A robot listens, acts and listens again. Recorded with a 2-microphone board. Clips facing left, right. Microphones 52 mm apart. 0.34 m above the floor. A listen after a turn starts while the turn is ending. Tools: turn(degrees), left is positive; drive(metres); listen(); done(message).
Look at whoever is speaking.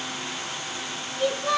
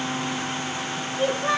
turn(degrees=-30)
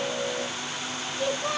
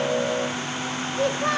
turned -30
turn(degrees=-115)
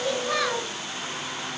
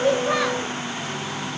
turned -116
listen()
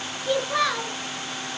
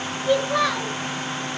done("Found it: a child speaking, straight ahead.")